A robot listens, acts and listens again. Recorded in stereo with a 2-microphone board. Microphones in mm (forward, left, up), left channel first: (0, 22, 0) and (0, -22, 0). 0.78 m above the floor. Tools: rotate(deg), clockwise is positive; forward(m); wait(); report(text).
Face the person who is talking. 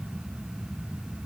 wait()
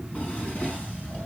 wait()
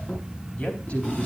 rotate(-35)
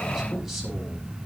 wait()
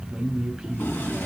report("Found it: a man speaking, straight ahead, 2 to 4 m away.")